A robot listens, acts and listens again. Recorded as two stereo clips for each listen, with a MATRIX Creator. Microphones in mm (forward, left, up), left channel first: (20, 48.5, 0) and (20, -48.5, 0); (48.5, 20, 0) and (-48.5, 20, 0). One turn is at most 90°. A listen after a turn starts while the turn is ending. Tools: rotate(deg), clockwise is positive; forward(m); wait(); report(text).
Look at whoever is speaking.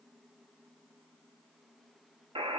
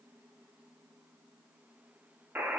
wait()
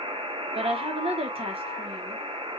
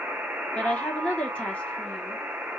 rotate(80)
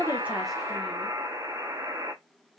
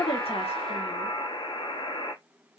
wait()
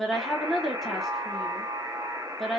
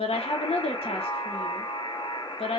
report("Facing the woman speaking.")